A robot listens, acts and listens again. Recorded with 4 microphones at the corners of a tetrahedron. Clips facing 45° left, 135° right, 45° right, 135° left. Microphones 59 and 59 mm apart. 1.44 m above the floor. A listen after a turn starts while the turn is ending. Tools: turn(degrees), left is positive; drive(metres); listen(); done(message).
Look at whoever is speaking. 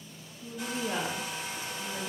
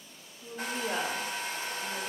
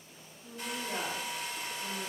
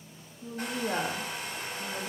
turn(degrees=145)
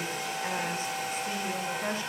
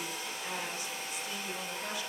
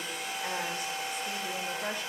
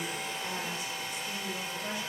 turn(degrees=-10)
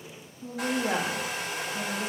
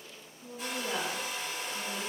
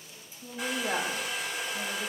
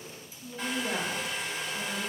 done("Facing the woman speaking, 2 to 4 m away.")